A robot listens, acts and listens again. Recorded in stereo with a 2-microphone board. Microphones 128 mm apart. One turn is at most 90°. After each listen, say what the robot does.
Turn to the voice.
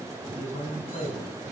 Turn 90° left.
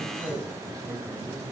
Facing the man speaking.